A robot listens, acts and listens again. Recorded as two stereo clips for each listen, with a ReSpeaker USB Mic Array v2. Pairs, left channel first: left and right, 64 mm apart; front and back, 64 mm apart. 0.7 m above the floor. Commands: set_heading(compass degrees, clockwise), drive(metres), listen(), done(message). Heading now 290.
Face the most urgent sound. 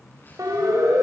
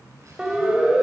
set_heading(35)
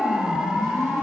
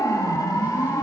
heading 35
set_heading(45)
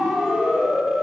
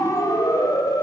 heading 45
set_heading(55)
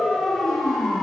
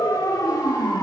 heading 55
done("Facing the siren, 2 to 4 m away.")